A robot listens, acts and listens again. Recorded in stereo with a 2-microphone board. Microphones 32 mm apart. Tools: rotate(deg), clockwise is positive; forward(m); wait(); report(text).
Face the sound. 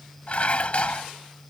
rotate(-45)
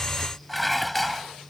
report("Facing the dishes clattering.")